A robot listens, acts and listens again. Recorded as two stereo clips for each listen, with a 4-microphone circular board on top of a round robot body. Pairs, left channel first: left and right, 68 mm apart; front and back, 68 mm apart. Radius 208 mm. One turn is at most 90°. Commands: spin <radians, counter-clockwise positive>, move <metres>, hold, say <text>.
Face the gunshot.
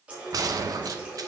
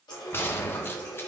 spin -0.96
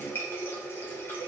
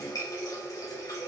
say I heard a gunshot from this way, but can't make it out now.